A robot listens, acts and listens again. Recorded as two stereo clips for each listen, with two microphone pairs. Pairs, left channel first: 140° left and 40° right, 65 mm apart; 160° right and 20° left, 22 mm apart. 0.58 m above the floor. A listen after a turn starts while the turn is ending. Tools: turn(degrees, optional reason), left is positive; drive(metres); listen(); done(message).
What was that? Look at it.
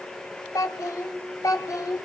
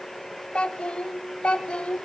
turn(degrees=170, reason="The child speaking: 170° left.")
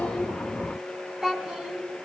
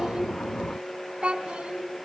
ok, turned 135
turn(degrees=40, reason="The child speaking is now 40° left.")
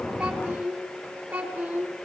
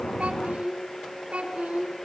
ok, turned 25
turn(degrees=20, reason="The child speaking is now 20° left.")
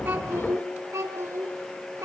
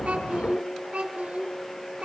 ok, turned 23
done("Facing the child speaking, over 4 m away.")